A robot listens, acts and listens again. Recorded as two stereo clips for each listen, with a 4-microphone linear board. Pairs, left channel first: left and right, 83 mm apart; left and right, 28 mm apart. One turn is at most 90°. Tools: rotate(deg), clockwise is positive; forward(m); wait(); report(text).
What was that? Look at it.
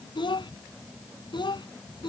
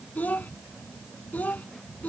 rotate(-65)
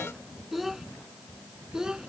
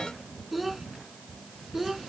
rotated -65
rotate(10)
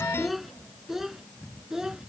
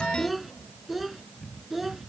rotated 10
report("Facing the child speaking.")